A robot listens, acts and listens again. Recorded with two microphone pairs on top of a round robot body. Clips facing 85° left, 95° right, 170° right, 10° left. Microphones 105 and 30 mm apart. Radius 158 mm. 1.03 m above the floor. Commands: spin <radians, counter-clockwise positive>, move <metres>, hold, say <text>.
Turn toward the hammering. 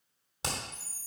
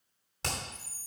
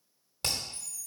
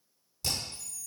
spin 2.79
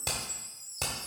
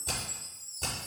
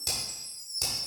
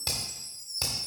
spin 1.22
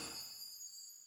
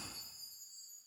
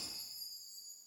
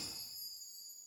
hold
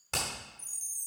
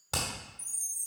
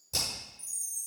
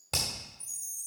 spin -0.26
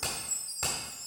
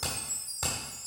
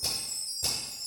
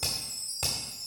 say Found it: hammering, straight ahead.